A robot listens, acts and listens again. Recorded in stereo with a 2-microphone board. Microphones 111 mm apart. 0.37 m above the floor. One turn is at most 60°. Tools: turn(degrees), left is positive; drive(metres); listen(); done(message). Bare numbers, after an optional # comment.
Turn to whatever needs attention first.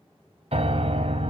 listen()
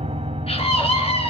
# The scream: about 60° left or 120° left.
turn(60)
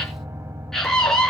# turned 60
done("Facing the scream.")